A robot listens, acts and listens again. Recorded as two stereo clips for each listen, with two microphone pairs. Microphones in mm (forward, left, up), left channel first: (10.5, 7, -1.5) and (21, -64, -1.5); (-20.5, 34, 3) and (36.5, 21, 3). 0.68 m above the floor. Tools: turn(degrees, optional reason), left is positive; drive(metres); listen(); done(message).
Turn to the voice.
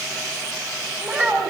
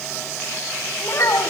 turn(degrees=-150, reason="The child speaking: 150° right.")
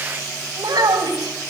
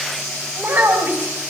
turn(degrees=-60, reason="The child speaking is now 60° right.")
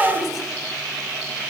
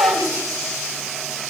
done("Found it: a child speaking, straight ahead.")